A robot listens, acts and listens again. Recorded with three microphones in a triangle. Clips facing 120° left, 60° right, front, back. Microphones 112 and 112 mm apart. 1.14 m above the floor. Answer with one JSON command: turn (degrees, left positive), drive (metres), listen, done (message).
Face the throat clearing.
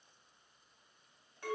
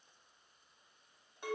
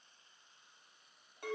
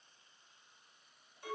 {"listen": true}
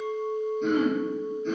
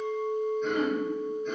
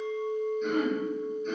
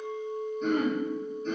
{"turn": 125}
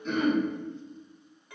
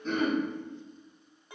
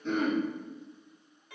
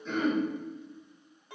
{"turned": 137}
{"turn": -10}
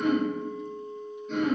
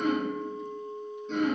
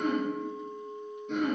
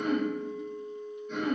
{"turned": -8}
{"done": "Found it: throat clearing, straight ahead."}